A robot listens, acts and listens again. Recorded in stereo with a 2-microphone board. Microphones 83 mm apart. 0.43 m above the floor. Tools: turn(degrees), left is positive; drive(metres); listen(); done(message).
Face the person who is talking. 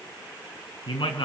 turn(degrees=90)
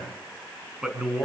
done("Facing the man speaking.")